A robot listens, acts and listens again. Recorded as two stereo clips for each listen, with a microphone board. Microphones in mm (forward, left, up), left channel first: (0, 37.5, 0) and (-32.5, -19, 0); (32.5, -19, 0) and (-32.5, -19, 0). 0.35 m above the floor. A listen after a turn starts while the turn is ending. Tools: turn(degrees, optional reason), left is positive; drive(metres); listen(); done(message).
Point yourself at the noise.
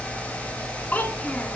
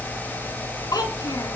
done("Facing the child speaking.")